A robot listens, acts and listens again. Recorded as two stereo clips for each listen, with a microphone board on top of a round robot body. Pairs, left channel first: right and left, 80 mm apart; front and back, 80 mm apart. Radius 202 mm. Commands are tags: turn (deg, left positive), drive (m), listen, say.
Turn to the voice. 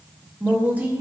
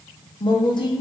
<turn deg="20"/>
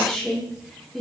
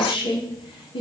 <say>Found it: a woman speaking, straight ahead.</say>